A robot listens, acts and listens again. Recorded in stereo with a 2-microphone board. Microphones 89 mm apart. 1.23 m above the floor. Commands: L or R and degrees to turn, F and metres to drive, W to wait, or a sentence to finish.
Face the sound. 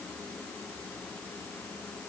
W
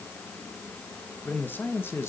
L30
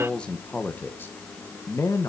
L40
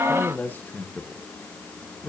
L20
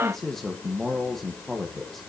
Found it: a man speaking, straight ahead.